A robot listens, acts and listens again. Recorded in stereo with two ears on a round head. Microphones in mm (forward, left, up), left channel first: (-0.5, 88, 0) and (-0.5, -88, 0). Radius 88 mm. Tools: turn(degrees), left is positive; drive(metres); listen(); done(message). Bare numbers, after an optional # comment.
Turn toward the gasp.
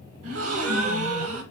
# The gasp: about 75° right or 105° right.
turn(-75)
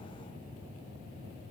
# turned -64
listen()
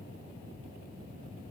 done("I heard a gasp, but can't make it out now. It was about 10° right or 40° right.")